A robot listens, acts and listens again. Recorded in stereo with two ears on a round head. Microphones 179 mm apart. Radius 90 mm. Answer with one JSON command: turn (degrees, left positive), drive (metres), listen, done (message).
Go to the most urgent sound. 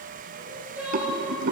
{"turn": -30}
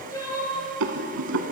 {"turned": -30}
{"turn": 20}
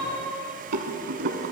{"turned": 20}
{"drive": 1.0}
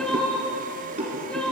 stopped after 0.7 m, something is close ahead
{"done": "I am next to the crying."}